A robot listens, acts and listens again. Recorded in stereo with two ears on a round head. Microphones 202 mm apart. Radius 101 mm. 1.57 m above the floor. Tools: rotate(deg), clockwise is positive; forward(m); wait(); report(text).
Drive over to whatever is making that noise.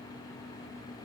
wait()
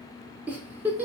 rotate(30)
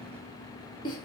rotate(-20)
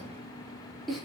forward(1.0)
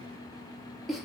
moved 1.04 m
forward(1.0)
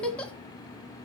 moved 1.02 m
forward(1.0)
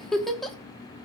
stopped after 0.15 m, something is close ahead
report("I am next to the giggle.")